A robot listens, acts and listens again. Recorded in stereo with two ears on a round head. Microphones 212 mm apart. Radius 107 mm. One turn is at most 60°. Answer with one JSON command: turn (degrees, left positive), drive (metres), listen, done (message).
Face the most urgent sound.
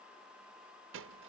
{"listen": true}
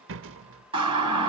{"turn": -20}
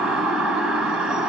{"done": "Facing the siren, 2 to 4 m away."}